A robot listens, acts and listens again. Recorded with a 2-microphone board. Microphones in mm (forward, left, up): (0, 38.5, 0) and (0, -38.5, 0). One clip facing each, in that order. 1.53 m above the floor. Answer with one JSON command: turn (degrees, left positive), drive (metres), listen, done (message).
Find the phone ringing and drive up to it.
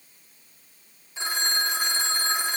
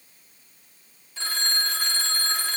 {"turn": 20}
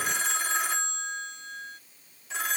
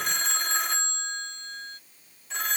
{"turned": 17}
{"drive": 1.0}
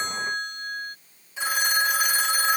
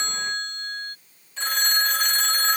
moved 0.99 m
{"turn": 10}
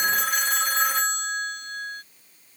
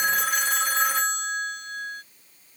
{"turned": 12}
{"drive": 1.0}
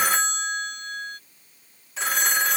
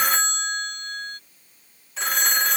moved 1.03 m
{"drive": 1.0}
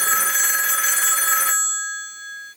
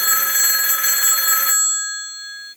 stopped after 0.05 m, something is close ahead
{"done": "Arrived at the phone ringing, straight ahead."}